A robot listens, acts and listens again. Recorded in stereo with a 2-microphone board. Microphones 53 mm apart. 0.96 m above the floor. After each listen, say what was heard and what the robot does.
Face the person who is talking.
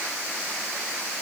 Keep listening.
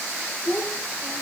Turn 90° left.
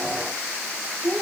Found it: a child speaking, straight ahead, 2 to 4 m away.